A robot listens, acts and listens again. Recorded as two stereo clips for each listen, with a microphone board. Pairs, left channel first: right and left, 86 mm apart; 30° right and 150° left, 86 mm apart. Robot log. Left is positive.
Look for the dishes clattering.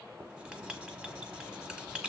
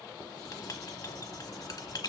cmd idle
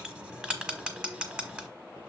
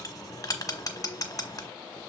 cmd idle
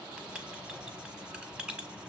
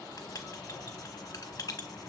end: I can't make out dishes clattering, only writing.